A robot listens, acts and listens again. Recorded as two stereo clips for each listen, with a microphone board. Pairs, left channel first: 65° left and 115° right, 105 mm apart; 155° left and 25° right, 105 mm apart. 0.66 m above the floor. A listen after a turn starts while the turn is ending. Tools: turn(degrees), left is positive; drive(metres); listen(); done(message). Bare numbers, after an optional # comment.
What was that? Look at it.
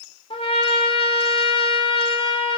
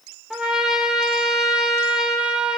# The trumpet: 60° left.
turn(60)
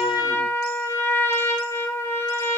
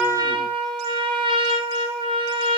done("Facing the trumpet.")